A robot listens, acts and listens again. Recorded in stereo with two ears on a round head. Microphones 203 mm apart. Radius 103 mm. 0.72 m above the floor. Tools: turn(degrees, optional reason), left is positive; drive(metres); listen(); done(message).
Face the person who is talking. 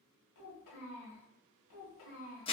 turn(degrees=90)
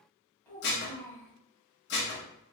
turn(degrees=10, reason="So it is at 10° left.")
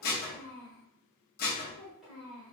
done("Facing the child speaking, 1 to 2 m away.")